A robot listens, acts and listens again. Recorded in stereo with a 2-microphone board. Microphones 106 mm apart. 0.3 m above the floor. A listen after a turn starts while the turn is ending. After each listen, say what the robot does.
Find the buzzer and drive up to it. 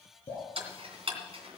Keep listening.
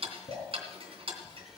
Keep listening.
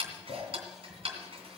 I can't make out a buzzer, only ticking and dripping.